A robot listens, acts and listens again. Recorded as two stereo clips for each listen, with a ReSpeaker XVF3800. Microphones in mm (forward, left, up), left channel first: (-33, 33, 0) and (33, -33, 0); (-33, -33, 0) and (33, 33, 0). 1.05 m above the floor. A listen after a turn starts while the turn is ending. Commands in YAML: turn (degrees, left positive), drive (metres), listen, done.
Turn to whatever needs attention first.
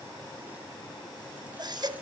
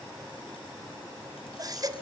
done: "Found it: a baby crying, straight ahead."